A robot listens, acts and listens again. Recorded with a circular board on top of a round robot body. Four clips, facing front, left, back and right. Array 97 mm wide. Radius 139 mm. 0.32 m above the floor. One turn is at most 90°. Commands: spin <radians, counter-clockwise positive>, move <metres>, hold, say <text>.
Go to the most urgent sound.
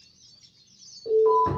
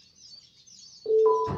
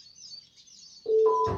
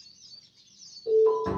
spin 1.40
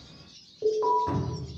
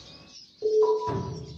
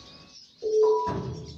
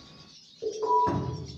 spin 0.44
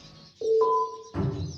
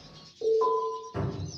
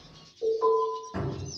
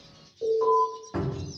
spin 0.26
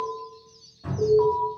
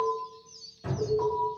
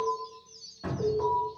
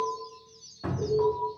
move 1.0
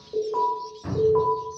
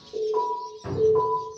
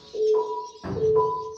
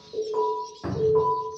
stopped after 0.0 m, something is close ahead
say Something is in my way. I am facing the alarm but have not reached it.